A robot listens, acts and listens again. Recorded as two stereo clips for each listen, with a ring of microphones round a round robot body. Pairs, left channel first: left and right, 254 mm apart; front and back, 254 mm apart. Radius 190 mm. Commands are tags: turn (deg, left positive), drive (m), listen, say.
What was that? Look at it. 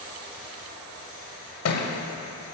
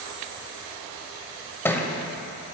<turn deg="80"/>
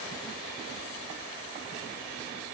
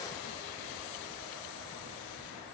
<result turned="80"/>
<say>Facing where the thud came from. I can't hear it now.</say>